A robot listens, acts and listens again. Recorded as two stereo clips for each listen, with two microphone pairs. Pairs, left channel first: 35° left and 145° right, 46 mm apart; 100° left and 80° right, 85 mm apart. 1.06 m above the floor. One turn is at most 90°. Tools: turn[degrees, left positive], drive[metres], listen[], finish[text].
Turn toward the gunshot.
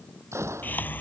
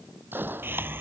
Thought: The gunshot: 140° right.
Action: turn[-90]
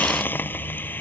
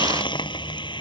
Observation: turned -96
Thought: Nothing new. It was at 45° right.
Action: turn[-45]
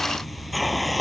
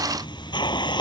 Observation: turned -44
Action: finish[I heard a gunshot from this way, but can't make it out now.]